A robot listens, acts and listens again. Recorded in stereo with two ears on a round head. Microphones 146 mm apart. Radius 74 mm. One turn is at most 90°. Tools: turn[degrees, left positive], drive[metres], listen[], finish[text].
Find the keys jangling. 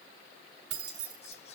Action: turn[-90]
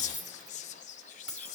Action: finish[Found it: keys jangling, straight ahead, 2 to 4 m away.]